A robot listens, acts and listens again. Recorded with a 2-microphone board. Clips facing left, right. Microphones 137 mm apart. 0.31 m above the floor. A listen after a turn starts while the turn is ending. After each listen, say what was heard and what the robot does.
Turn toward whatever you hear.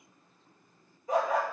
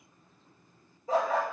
The dog barking: about 35° right or 145° right. Turn 35° right.
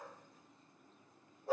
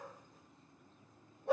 So it is at 90° right. Turn 90° right.
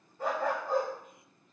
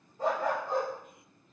Found it: a dog barking, straight ahead.